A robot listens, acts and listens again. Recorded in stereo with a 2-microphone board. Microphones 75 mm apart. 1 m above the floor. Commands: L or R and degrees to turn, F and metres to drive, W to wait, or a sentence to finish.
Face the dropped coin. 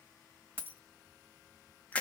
R25
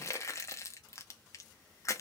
W
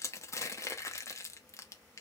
I heard a dropped coin, but can't make it out now. It was about straight ahead or 130° right.